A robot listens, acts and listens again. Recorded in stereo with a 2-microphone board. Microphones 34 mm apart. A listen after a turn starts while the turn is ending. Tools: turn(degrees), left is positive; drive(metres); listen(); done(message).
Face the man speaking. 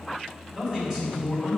turn(degrees=-30)
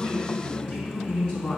turn(degrees=20)
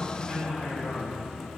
done("Found it: a man speaking, straight ahead, 2 to 4 m away.")